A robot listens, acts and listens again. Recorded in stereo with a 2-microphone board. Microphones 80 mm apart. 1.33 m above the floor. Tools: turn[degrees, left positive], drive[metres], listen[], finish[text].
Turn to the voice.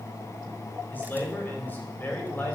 Thought: The man speaking: about 25° left or 155° left.
Action: turn[25]
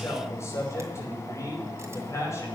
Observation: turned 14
Thought: So it is at 145° left.
Action: turn[145]
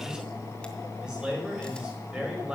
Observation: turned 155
Thought: The man speaking is now 10° right.
Action: turn[-10]
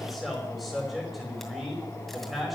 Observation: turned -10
Action: finish[Found it: a man speaking, straight ahead, over 4 m away.]